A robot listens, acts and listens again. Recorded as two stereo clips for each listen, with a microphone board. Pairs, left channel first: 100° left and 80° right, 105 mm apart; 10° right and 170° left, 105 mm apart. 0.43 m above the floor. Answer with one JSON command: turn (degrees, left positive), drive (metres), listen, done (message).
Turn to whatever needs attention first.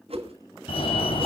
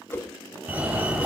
{"turn": 95}
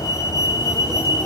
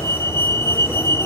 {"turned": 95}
{"turn": 50}
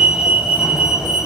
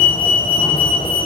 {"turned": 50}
{"done": "Found it: a fire alarm, straight ahead, 2 to 4 m away."}